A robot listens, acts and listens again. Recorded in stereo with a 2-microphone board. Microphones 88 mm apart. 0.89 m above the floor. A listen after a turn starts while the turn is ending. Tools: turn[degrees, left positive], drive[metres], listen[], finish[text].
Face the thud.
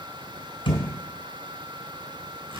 Action: turn[90]
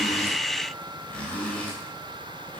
Action: finish[I heard a thud from this way, but can't make it out now.]